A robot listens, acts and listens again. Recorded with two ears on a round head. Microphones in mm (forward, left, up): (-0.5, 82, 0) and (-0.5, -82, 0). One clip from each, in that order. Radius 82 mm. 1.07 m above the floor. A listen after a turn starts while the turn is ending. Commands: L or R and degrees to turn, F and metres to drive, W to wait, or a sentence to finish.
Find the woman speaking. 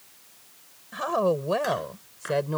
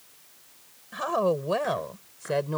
L30
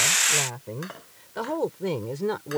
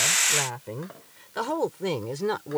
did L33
R30
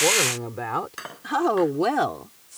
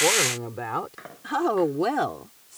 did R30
L10
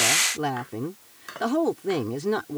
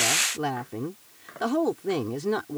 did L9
Facing the woman speaking.